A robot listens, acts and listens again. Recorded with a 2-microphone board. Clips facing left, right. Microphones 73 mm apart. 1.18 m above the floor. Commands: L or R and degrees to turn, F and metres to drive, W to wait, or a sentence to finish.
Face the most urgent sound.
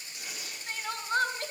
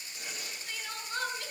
L60
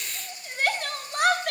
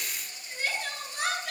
L55
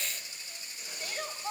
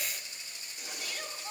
L25
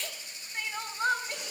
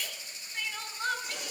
L15
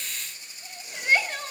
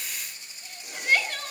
Facing the crying.